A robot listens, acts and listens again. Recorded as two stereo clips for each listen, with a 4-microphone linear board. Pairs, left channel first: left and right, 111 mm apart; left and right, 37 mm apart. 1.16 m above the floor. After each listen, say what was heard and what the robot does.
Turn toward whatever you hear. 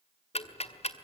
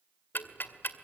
The ticking: about 70° left or 110° left. Turn 70° left.
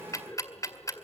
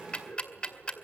So it is at 30° left. Turn 30° left.
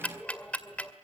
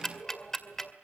The ticking is now 10° left. Turn 10° left.
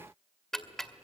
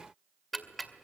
Found it: ticking, straight ahead.